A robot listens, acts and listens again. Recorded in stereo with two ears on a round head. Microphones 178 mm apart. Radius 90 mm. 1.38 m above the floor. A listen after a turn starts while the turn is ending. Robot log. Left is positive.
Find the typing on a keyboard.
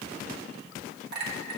cmd idle
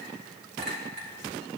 cmd idle
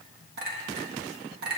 end: I can't make out typing on a keyboard to turn to.